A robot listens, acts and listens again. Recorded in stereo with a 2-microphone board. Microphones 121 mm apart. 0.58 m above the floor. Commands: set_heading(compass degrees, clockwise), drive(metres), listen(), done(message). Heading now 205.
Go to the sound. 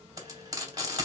set_heading(235)
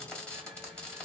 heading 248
set_heading(238)
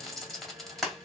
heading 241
drive(1.0)
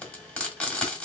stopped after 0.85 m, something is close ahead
set_heading(231)
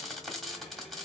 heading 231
done("I am next to the frying.")